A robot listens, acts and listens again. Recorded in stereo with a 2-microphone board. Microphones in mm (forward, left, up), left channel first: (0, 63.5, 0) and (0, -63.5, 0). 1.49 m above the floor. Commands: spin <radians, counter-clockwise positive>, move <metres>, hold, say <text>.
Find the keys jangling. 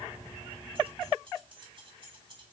spin -0.70
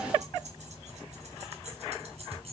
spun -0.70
spin -2.18
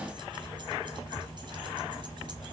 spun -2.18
hold
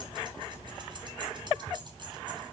hold
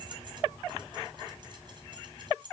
spin -0.70
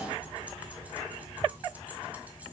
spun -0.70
hold
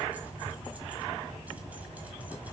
hold
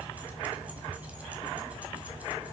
say Facing where the keys jangling came from. I can't hear it now.